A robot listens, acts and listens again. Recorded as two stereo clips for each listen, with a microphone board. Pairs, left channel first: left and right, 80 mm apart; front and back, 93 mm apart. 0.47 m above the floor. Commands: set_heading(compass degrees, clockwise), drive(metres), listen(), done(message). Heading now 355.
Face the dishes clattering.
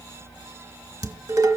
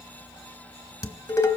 set_heading(45)
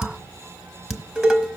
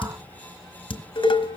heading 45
done("Found it: dishes clattering, straight ahead.")